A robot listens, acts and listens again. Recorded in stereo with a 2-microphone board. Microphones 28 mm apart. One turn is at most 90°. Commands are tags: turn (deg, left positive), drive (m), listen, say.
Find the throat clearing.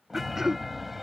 <turn deg="-15"/>
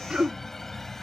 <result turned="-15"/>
<turn deg="-90"/>
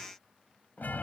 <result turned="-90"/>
<turn deg="-60"/>
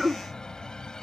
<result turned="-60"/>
<say>Found it: throat clearing, straight ahead.</say>